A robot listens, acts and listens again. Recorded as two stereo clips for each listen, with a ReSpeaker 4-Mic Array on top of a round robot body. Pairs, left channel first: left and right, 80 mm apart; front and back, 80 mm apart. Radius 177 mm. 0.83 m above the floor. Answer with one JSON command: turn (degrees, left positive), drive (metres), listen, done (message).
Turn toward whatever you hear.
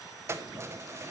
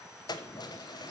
{"turn": -30}
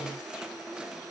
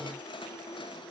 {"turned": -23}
{"turn": -10}
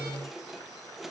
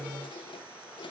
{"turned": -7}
{"done": "Facing the keys jangling."}